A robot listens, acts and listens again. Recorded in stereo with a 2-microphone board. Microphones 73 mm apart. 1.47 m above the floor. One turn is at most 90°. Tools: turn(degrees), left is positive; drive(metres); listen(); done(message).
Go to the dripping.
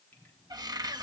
listen()
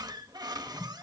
turn(degrees=25)
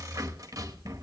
listen()
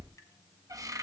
listen()
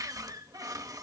done("I heard dripping, but can't make it out now. It was about straight ahead or 130° left. I did not reach it.")